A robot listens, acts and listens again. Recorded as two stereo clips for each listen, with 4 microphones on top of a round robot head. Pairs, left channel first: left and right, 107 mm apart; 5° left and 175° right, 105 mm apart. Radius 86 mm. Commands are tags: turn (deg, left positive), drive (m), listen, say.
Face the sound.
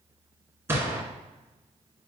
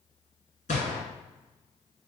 <turn deg="-20"/>
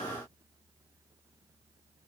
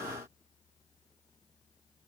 <say>I heard a gunshot from this way, but can't make it out now.</say>